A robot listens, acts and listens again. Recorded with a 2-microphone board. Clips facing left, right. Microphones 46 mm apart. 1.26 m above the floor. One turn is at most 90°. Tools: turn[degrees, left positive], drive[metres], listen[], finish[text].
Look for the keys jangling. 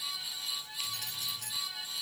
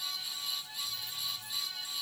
Action: turn[90]
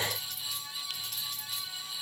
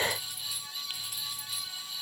Thought: So it is at 10° right.
Action: turn[-10]
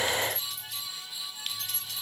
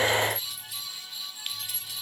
Action: finish[Facing the keys jangling.]